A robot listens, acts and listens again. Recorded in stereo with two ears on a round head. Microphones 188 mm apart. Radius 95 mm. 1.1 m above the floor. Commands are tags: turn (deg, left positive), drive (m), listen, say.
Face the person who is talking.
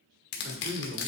<turn deg="-50"/>
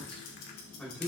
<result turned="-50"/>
<say>Found it: a man speaking, straight ahead, 2 to 4 m away.</say>